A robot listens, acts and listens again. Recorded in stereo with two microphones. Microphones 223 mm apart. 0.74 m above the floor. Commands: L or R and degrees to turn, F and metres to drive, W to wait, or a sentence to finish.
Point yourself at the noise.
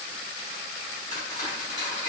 L30
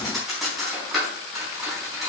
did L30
Facing the cutlery clinking.